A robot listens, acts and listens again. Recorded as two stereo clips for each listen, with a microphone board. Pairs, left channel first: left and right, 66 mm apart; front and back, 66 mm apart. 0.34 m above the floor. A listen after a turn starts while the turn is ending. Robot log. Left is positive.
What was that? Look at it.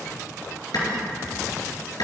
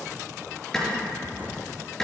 note: The clap: 80° left.
cmd yaw +80
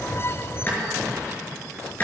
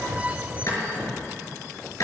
note: The clap is now 30° left.
cmd yaw +30
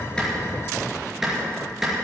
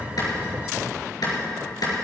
end: Facing the clap.